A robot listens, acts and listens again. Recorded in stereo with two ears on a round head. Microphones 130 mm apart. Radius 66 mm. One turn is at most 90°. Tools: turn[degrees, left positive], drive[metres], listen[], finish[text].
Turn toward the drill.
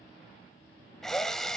Action: turn[30]
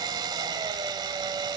Thought: So it is at 25° right.
Action: turn[-25]
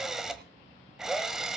Action: finish[Found it: a drill, straight ahead.]